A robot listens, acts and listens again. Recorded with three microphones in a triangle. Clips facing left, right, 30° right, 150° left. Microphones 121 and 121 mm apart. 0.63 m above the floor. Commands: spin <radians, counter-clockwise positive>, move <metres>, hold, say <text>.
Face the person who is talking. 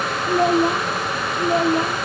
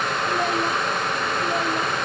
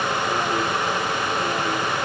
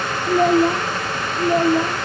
spin 2.62
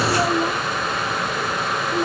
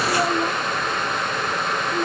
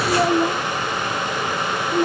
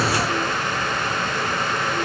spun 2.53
say Facing the child speaking.